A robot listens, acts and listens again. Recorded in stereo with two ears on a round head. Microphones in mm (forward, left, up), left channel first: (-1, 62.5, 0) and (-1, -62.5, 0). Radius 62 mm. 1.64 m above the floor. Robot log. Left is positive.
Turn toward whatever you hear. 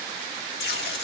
cmd yaw +90
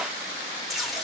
end: Found it: tape being pulled, straight ahead, 2 to 4 m away.